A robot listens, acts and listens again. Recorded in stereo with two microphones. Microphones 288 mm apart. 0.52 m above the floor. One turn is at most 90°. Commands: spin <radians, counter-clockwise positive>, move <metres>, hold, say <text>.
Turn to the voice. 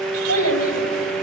spin 0.96
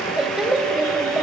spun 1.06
say Found it: a child speaking, straight ahead.